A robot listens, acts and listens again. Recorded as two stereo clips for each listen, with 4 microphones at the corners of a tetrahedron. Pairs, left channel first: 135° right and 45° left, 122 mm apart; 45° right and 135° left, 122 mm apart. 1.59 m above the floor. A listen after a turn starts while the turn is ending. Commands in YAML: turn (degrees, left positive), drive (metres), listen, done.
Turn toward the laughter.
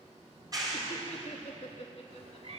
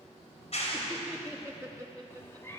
turn: -165
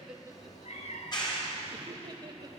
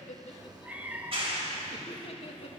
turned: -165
turn: -10
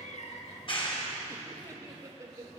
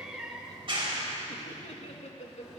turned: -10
turn: -20
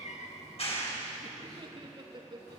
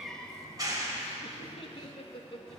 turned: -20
done: "Facing the laughter, 2 to 4 m away."